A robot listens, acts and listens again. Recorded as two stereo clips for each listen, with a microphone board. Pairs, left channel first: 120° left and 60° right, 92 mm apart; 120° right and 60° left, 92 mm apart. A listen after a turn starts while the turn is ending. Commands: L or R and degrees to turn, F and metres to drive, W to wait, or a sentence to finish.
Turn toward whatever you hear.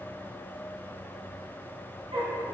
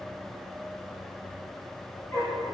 R65
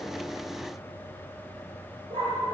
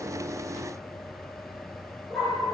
R35
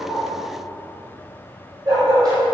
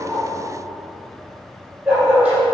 R15
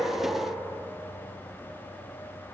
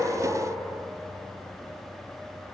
W
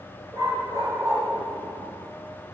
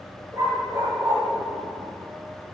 Facing the dog barking.